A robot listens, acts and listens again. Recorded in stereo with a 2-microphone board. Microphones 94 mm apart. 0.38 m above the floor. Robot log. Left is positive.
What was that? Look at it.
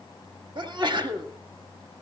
note: The sneeze: about 55° right or 125° right.
cmd yaw -55
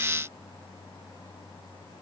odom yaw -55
cmd idle
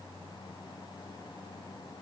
end: I heard a sneeze, but can't make it out now. It was about straight ahead or 70° right.